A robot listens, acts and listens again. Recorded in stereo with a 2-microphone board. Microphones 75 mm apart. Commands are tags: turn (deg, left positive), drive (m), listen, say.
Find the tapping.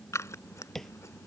<turn deg="30"/>
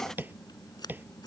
<turn deg="-30"/>
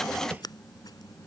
<listen/>
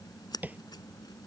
<turn deg="-25"/>
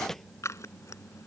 <say>Found it: tapping, straight ahead.</say>